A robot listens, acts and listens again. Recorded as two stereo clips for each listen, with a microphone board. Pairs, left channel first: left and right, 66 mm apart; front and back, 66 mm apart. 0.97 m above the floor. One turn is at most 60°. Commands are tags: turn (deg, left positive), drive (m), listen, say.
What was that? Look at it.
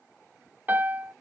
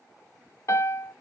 <turn deg="-35"/>
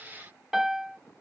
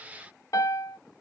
<say>Facing the piano.</say>